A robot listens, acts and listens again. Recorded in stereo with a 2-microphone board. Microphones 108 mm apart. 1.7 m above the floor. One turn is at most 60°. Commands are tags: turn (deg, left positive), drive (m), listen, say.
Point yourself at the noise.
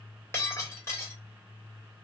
<turn deg="25"/>
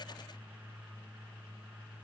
<listen/>
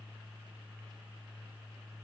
<say>I heard breaking glass, but can't make it out now. It was about straight ahead or 130° left.</say>